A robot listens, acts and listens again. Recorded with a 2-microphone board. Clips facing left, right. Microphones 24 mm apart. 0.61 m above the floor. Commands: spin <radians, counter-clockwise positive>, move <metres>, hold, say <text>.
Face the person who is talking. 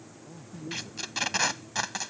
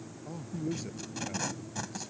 spin -0.61
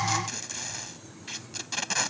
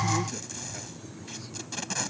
hold
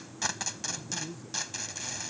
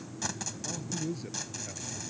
spin -1.92
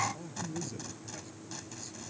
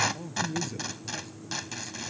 spin -0.26
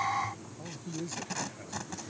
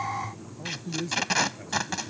say Found it: a man speaking, straight ahead.